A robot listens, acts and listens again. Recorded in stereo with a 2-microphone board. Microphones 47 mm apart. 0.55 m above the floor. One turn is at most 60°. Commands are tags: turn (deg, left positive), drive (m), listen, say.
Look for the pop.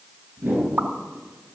<turn deg="-55"/>
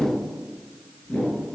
<listen/>
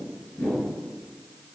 <say>I heard a pop, but can't make it out now. It was about straight ahead or 70° right.</say>